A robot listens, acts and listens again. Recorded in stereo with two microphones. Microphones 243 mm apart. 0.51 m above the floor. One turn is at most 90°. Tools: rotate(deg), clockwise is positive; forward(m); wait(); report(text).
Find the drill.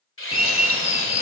rotate(-60)
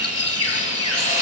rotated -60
rotate(-35)
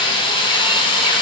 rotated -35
rotate(-25)
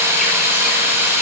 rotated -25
rotate(10)
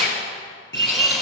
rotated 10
report("Found it: a drill, straight ahead.")